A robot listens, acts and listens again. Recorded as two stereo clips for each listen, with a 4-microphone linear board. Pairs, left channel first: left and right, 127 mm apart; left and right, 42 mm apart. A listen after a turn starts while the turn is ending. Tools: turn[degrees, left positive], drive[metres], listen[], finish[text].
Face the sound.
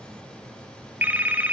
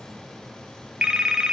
Action: turn[-30]
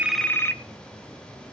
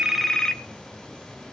Thought: So it is at 15° left.
Action: turn[15]
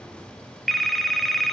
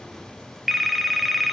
Action: finish[Found it: a phone ringing, straight ahead, 1 to 2 m away.]